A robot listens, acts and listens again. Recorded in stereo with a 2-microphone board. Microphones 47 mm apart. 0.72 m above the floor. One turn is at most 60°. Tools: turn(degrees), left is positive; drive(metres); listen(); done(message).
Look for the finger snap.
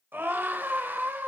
listen()
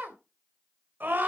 listen()
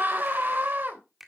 turn(degrees=-30)
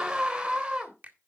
turn(degrees=-60)
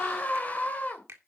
turn(degrees=-60)
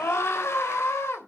turn(degrees=-25)
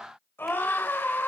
listen()
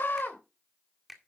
done("Found it: a finger snap, straight ahead.")